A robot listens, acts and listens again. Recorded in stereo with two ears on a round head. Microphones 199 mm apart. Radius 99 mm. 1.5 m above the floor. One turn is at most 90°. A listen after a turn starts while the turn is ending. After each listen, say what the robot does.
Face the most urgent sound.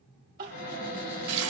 Turn 40° right.
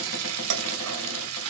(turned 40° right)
Keep listening.
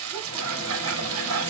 Keep listening.
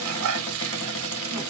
I heard crying, but can't make it out now. It was about straight ahead or 100° right.